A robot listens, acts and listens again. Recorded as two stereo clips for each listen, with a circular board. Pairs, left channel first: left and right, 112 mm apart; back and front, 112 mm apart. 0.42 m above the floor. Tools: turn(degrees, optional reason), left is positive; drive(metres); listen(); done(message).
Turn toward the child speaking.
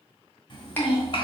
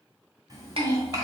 turn(degrees=50, reason="The child speaking: 50° left.")
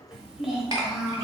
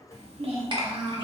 done("Facing the child speaking.")